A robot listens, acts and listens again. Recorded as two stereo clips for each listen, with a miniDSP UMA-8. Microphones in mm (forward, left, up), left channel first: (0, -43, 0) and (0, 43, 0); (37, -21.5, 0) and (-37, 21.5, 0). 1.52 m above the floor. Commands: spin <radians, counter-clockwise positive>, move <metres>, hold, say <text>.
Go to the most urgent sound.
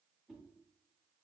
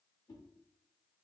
hold
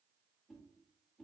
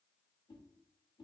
hold
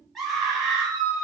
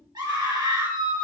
spin -3.05
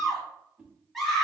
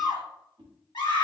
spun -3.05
move 1.0
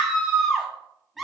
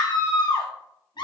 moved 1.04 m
move 1.0
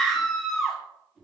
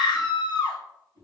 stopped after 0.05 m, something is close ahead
say I am next to the scream.